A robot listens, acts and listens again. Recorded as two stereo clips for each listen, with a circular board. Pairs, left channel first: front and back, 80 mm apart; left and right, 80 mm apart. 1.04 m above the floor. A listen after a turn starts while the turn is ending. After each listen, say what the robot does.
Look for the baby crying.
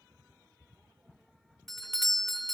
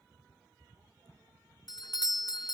Keep listening.
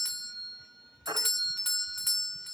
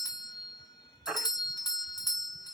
Turn 170° right.
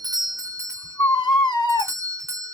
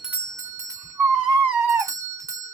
Turn 25° right.
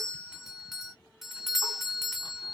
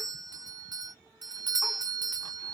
Keep listening.
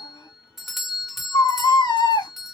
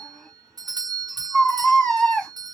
Turn 10° left.
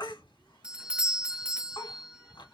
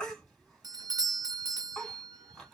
Keep listening.
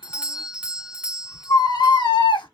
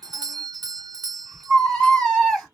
Facing the baby crying.